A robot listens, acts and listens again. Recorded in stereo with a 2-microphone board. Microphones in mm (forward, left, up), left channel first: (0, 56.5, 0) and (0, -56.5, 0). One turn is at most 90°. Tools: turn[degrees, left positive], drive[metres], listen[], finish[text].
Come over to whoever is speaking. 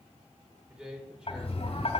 Action: turn[-30]
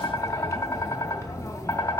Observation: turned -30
Action: listen[]
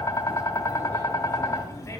Action: listen[]
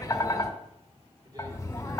Action: finish[I heard a man speaking, but can't make it out now. It was about 25° left or 145° right. I did not reach it.]